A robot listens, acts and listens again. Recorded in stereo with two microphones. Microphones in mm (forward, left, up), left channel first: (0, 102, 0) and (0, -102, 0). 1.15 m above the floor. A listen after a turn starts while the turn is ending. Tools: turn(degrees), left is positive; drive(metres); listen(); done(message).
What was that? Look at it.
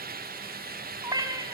turn(degrees=-20)
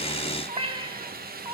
turn(degrees=-20)
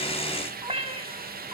turn(degrees=-30)
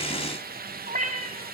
turn(degrees=-140)
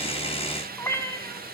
turn(degrees=15)
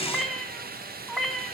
done("Found it: a cat meowing, straight ahead, 2 to 4 m away.")